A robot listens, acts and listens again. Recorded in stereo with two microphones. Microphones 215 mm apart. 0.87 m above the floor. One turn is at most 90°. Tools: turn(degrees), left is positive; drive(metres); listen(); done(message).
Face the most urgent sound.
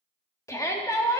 turn(degrees=30)
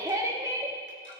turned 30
turn(degrees=-15)
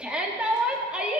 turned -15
done("Facing the shout, 1 to 2 m away.")